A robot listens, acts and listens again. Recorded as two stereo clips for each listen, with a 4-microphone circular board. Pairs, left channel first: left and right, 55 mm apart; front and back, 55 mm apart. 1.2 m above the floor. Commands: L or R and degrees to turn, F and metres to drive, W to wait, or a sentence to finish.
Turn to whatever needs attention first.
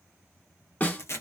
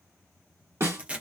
W
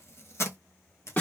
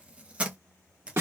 W
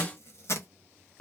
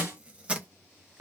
I can't make out anything urgent to turn to.